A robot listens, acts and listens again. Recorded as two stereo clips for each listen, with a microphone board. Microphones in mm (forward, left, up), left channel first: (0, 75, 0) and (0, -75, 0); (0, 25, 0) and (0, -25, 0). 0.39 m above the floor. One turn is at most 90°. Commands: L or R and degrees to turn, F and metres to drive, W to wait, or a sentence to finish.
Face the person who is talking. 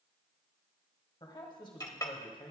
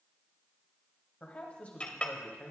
L30
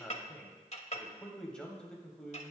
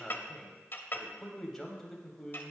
Facing the man speaking, 1 to 2 m away.